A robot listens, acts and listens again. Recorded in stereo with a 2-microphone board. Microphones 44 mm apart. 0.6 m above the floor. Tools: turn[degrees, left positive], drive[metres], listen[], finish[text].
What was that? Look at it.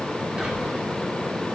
Action: turn[-30]
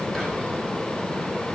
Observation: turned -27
Thought: So it is at 10° left.
Action: turn[10]
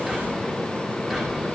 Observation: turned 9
Action: finish[Facing the whispering, over 4 m away.]